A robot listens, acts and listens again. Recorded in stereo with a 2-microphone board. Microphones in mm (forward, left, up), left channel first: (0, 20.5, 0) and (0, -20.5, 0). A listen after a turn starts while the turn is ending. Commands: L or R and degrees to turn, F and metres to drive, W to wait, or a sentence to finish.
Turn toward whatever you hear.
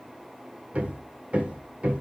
R35
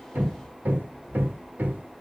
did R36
R100
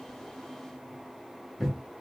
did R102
Facing the hammering, under 1 m away.